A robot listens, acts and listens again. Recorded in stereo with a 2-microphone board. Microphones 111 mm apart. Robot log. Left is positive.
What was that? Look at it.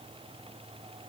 cmd idle
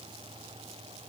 cmd idle
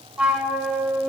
cmd yaw -30
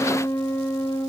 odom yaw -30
note: So it is at 20° left.
cmd yaw +20
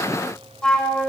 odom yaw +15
end: Facing the flute, 1 to 2 m away.